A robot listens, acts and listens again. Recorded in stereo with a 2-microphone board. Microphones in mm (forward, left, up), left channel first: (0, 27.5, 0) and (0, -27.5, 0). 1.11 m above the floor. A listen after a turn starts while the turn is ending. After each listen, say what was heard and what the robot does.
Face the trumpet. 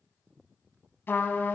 The trumpet: about 35° left or 145° left. Turn 35° left.
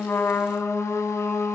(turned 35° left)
So it is at 100° left. Turn 100° left.
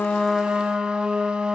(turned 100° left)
The trumpet is now 15° right. Turn 15° right.
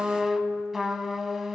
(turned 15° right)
Facing the trumpet.